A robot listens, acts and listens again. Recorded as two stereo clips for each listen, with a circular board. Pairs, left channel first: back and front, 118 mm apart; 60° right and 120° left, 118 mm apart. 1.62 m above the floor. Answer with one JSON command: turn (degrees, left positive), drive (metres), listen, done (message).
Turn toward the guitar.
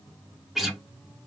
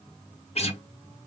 {"turn": -90}
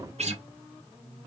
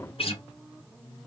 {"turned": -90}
{"turn": -25}
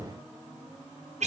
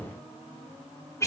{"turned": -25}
{"done": "Facing the guitar."}